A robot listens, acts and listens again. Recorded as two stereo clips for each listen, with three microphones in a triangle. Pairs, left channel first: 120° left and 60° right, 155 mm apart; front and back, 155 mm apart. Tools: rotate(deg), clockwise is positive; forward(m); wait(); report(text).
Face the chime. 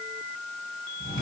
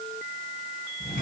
wait()
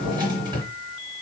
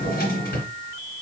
wait()
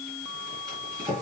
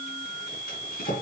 report("I can't make out a chime to turn to.")